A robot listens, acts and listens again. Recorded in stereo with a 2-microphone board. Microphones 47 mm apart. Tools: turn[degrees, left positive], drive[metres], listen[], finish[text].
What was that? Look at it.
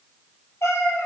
Action: turn[90]
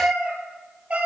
Thought: So it is at 30° right.
Action: turn[-30]
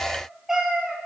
Thought: The cat meowing is now 15° right.
Action: turn[-15]
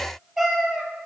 Thought: The cat meowing is now 10° right.
Action: turn[-10]
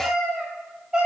Thought: The cat meowing is now 20° right.
Action: turn[-20]
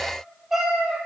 Action: finish[Found it: a cat meowing, straight ahead.]